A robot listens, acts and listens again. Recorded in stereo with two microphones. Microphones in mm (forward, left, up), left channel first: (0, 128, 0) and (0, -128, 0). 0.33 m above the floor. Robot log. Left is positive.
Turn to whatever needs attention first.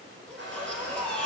cmd yaw +30
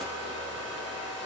cmd idle
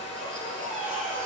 note: So it is at 30° right.
cmd yaw -30
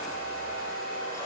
cmd idle
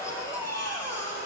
note: The baby crying is now 10° left.
cmd yaw +10
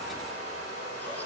cmd idle
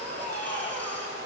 end: Found it: a baby crying, straight ahead.